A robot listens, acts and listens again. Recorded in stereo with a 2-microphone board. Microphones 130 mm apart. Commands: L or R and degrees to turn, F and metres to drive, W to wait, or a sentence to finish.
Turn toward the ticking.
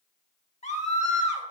W
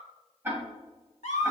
R15
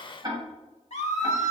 R145
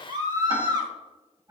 R35
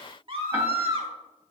W
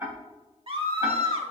R20
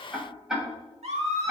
Found it: ticking, straight ahead.